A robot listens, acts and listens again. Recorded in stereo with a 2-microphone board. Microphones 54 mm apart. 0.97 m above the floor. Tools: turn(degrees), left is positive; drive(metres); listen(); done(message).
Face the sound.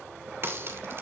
turn(degrees=-45)
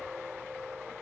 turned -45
listen()
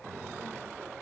done("I heard a crack, but can't make it out now. It was about straight ahead or 90° right.")